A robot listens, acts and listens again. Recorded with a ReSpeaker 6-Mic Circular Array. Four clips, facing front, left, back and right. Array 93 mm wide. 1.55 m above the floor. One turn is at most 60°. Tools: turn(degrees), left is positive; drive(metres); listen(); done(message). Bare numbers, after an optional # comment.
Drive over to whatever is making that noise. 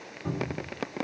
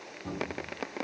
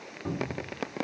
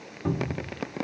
# The cupboard door: 90° right.
turn(-60)
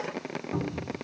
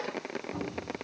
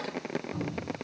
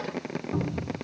# The cupboard door is now 45° right.
turn(-45)
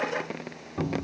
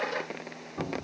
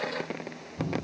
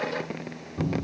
# The cupboard door is now 15° left.
turn(15)
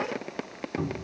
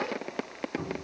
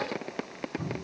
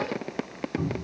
drive(1.0)
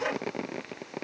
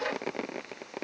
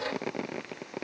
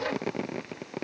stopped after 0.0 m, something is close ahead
listen()
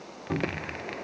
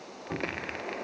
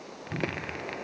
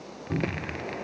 done("Something is in my way. I am facing the cupboard door but have not reached it.")